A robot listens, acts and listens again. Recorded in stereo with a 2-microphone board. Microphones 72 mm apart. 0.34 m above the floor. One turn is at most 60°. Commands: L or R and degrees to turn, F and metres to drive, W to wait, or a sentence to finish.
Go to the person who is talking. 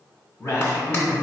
L50
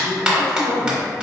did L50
L60
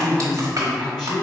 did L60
F1.0
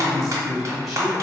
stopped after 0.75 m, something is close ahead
I am next to the man speaking.